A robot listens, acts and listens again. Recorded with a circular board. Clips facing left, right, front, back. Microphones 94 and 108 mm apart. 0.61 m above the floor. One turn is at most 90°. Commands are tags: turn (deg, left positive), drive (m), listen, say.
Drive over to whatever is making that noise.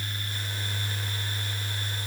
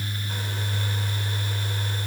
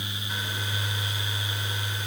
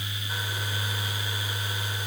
<listen/>
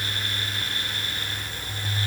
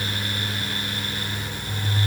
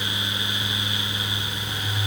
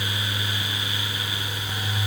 <listen/>
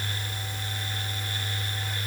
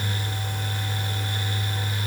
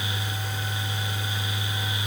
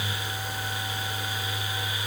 <say>I can't make out anything to turn to.</say>